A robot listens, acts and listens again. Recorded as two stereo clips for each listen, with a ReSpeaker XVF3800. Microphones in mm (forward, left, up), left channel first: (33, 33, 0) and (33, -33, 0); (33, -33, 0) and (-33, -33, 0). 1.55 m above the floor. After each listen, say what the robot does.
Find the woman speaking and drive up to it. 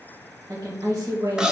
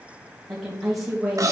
Turn 90° right.
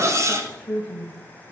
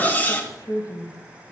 Turn 15° left.
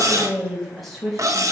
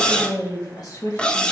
Drive 1.0 m forward.
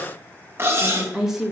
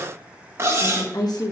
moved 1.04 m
Drive 1.0 m forward.
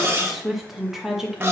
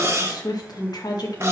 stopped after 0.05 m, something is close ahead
Arrived at the woman speaking, straight ahead.